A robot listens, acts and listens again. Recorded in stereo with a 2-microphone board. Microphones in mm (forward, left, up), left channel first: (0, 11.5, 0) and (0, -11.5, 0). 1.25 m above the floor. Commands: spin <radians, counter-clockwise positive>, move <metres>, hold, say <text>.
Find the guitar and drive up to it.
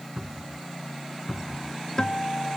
spin 0.52
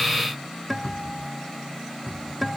move 1.0
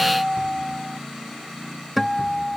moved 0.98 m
move 1.0
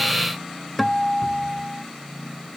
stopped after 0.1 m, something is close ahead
say Arrived at the guitar, straight ahead.